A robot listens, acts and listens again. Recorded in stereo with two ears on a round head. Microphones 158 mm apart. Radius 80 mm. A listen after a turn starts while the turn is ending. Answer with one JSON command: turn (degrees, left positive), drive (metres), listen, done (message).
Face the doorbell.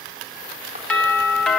{"turn": 30}
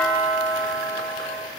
{"turn": -20}
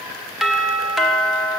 {"done": "Found it: a doorbell, straight ahead."}